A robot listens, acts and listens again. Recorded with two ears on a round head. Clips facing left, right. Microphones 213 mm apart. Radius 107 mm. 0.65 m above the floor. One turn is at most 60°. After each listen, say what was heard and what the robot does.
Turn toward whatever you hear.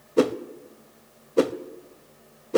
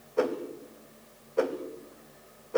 The whoosh: about 50° left or 130° left. Turn 50° left.
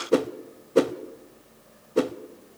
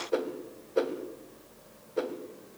So it is at 75° left. Turn 60° left.
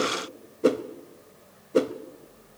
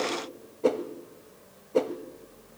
The whoosh is now 20° left. Turn 20° left.
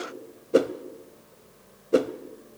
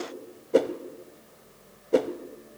The whoosh is now 10° left. Turn 10° left.
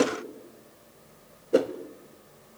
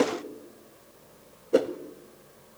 Found it: a whoosh, straight ahead, under 1 m away.